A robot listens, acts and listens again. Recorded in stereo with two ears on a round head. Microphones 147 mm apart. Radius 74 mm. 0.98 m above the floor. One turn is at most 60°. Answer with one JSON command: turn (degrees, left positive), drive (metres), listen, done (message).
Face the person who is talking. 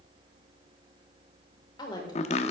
{"turn": 30}
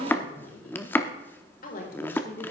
{"turn": 60}
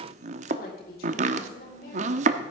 {"turn": 60}
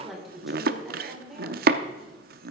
{"done": "Facing the woman speaking, 2 to 4 m away."}